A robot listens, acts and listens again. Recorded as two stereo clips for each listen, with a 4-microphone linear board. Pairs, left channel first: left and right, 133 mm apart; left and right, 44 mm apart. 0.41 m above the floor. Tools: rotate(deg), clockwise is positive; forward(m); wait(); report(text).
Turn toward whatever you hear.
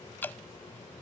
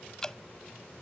rotate(-30)
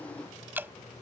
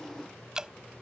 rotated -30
rotate(15)
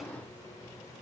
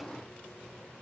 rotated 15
wait()
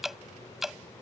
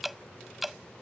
report("Found it: dripping, straight ahead.")